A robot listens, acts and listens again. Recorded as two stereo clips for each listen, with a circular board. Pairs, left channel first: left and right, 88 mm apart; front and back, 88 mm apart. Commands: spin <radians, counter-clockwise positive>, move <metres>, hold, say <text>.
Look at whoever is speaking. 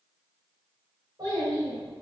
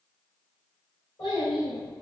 spin -0.79
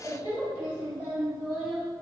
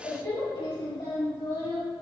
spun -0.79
spin -0.17
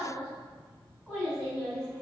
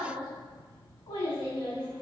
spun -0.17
say Found it: a child speaking, straight ahead, 2 to 4 m away.